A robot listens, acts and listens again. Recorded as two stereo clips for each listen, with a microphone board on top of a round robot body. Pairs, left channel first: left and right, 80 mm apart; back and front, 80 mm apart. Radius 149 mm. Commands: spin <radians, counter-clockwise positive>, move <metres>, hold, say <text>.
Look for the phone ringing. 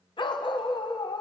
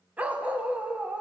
hold
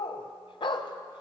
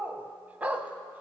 hold
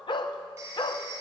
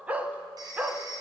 spin -0.61
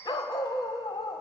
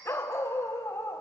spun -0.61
hold
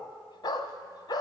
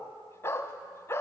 hold
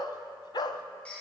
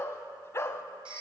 spin 0.17
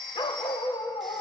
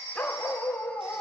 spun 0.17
say Found it: a phone ringing, straight ahead.